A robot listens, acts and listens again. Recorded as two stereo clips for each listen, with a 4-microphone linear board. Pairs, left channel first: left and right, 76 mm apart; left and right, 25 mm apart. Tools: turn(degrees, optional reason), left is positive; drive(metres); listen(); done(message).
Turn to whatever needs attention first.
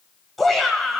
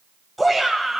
turn(degrees=30)
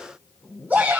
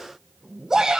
turn(degrees=-25, reason="So it is at 25° right.")
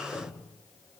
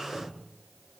listen()
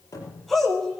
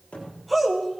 done("Found it: a shout, straight ahead.")